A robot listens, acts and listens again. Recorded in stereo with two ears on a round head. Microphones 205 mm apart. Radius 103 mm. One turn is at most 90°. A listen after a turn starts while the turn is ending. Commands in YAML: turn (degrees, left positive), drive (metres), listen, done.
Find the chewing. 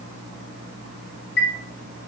listen: true
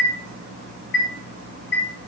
listen: true
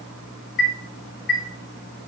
done: "I can't make out chewing, only a chime."